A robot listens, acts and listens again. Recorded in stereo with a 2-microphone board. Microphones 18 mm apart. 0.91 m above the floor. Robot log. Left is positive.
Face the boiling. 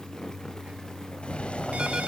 note: The boiling: about 75° left or 105° left.
cmd yaw +75
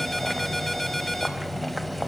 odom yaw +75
end: Facing the boiling.